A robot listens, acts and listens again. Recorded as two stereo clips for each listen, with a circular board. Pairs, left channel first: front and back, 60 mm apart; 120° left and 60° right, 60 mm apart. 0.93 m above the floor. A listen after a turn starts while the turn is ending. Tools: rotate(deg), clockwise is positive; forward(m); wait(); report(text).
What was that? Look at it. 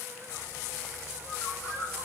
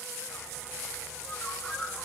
rotate(-40)
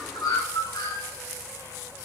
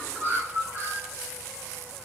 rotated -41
report("Facing the bird, over 4 m away.")